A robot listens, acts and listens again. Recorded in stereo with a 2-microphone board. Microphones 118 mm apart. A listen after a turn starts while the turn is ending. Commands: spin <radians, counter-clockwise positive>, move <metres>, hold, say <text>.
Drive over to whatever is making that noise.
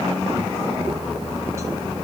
hold
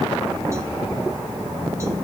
hold
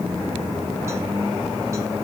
say I can't make out anything.